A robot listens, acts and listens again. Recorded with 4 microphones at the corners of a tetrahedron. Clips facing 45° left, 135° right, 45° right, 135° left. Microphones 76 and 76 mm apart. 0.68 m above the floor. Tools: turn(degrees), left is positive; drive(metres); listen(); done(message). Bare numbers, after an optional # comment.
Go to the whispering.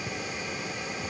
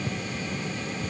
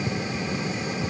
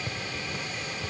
listen()
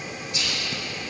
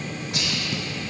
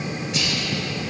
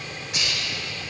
# The whispering: 140° right.
turn(-140)
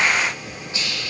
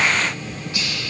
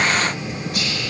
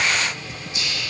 # The whispering is now 20° right.
turn(-20)
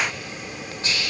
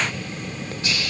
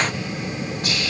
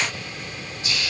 # The whispering is now 10° right.
turn(-10)
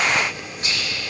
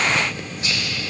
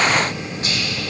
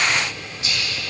drive(1.0)
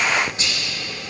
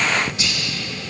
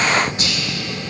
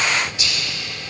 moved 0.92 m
drive(1.0)
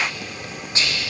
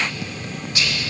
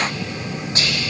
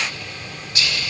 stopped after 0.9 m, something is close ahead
done("Arrived at the whispering, straight ahead.")